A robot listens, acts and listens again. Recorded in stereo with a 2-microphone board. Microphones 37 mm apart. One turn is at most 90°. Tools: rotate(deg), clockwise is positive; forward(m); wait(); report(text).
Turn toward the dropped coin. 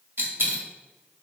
rotate(90)
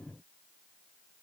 report("Facing where the dropped coin came from. I can't hear it now.")